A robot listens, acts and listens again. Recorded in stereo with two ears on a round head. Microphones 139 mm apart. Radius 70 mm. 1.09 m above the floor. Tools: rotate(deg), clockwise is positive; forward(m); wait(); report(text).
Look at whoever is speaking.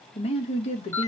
rotate(-40)
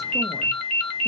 wait()
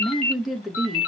report("Facing the woman speaking.")